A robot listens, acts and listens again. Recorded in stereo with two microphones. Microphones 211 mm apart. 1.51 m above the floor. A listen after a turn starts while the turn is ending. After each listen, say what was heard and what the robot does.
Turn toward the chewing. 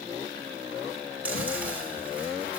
Turn 30° right.
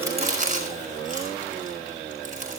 So it is at 145° right. Turn 145° right.
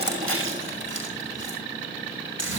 The chewing is now 70° right. Turn 70° right.
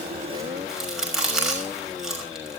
Facing the chewing.